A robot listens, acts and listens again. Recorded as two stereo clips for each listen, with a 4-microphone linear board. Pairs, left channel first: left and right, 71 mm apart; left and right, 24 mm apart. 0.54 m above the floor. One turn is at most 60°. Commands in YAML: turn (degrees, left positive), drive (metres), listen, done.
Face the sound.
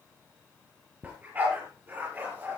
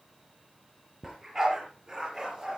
turn: -25
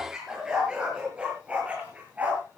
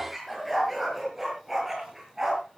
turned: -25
turn: -20
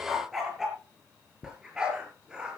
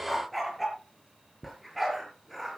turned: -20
turn: -10
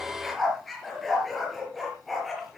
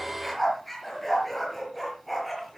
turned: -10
done: "Found it: a dog barking, straight ahead."